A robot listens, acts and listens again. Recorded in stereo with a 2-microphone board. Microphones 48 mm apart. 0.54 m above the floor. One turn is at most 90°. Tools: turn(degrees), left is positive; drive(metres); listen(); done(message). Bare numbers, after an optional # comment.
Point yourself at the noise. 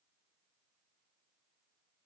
listen()
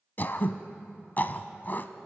# The throat clearing: about 40° left or 140° left.
turn(40)
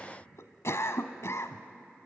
# So it is at 100° left.
turn(90)
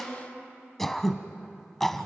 # The throat clearing is now 10° left.
turn(10)
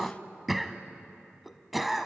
done("Facing the throat clearing.")